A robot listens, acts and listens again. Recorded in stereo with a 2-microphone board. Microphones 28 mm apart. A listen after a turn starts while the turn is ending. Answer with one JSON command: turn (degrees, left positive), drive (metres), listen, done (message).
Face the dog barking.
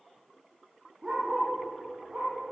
{"turn": -25}
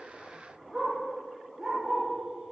{"done": "Found it: a dog barking, straight ahead."}